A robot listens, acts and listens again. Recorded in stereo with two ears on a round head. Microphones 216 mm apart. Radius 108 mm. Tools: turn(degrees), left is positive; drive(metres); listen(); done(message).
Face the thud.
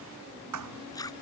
turn(degrees=-90)
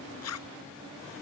done("I heard a thud from this way, but can't make it out now.")